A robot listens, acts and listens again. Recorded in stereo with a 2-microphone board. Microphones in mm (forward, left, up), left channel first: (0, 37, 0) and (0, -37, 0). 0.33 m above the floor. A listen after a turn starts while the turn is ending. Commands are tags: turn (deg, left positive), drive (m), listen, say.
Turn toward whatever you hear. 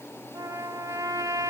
<turn deg="-55"/>
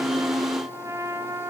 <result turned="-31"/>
<turn deg="-55"/>
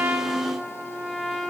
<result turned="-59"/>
<say>Facing the trumpet.</say>